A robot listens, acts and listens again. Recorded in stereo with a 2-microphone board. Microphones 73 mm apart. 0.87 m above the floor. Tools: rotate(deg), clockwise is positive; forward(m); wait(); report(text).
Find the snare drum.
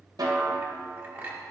rotate(65)
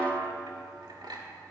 rotate(45)
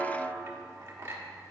report("Found it: a snare drum, straight ahead, 1 to 2 m away.")